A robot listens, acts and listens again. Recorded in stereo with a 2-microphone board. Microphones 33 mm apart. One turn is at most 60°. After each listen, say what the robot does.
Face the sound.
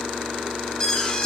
Turn 30° left.
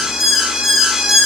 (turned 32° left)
Turn 15° right.
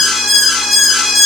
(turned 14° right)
Found it: an alarm, straight ahead, over 4 m away.